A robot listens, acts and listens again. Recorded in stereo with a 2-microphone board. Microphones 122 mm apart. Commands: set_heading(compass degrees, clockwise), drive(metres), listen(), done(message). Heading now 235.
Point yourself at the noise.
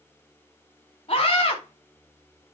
set_heading(185)
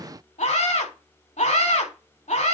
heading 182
set_heading(107)
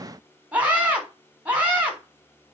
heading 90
set_heading(105)
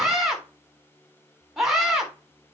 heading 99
done("Facing the scream.")